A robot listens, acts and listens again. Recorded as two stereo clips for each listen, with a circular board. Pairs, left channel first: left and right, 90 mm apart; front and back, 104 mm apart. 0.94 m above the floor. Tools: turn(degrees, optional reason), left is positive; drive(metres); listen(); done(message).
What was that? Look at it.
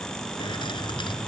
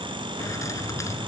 turn(degrees=60, reason="The keys jangling: 60° left.")
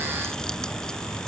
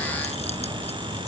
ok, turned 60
done("Facing the keys jangling.")